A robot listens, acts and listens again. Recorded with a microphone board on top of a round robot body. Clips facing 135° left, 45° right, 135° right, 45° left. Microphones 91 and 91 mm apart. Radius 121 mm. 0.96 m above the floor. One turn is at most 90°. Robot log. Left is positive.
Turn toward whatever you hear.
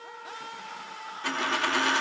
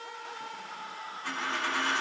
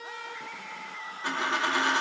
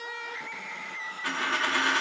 note: The dropped coin: 155° left.
cmd yaw +90
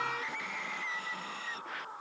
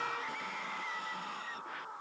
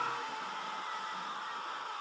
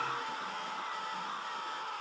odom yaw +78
note: Nothing new. It was at 75° left.
cmd yaw +75
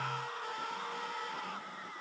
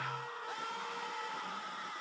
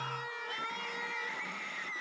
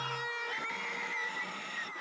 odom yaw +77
end: Facing where the dropped coin came from. I can't hear it now.